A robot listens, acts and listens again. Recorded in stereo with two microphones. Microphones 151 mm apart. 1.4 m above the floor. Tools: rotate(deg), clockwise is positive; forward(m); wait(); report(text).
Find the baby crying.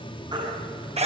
rotate(30)
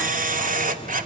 wait()
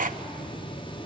wait()
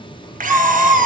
report("Found it: a baby crying, straight ahead.")